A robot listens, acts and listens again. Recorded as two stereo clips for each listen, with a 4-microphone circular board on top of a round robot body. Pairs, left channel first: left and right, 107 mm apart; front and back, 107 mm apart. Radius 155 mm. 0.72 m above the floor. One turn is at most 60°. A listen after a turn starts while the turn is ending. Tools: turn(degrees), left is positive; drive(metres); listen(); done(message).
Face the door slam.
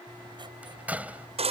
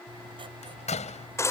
turn(degrees=-15)
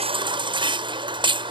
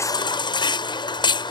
done("Facing where the door slam came from. I can't hear it now.")